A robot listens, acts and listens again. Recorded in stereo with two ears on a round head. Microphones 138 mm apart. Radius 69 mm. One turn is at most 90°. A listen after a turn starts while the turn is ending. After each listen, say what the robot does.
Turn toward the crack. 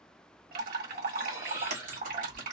Turn 50° right.
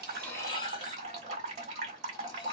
Keep listening.
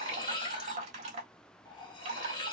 I heard a crack, but can't make it out now. It was about straight ahead or 80° right.